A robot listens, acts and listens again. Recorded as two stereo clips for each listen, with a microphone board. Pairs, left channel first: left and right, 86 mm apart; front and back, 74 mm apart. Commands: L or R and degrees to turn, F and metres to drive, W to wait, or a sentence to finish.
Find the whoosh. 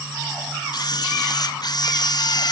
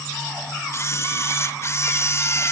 W
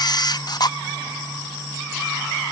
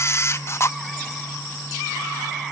W
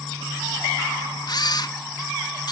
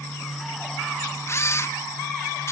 I can't make out a whoosh to turn to.